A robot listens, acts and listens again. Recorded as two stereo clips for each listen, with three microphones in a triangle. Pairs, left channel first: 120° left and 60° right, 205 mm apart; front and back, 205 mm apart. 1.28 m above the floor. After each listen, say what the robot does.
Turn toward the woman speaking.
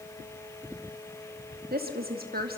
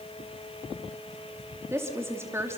Turn 105° right.
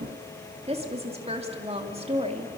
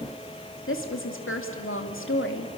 Found it: a woman speaking, straight ahead.